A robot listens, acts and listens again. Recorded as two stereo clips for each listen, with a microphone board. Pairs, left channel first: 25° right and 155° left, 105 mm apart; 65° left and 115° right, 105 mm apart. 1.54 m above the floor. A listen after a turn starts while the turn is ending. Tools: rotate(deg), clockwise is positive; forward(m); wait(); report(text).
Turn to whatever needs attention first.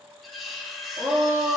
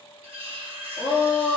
rotate(-100)
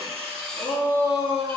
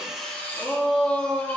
rotate(10)
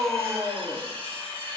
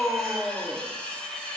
report("Found it: a shout, straight ahead.")